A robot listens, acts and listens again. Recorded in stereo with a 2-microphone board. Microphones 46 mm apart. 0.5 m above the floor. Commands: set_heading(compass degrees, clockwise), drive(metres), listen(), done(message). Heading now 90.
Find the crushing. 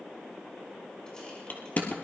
set_heading(55)
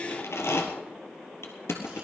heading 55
set_heading(310)
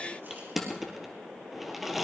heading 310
done("Found it: crushing, straight ahead.")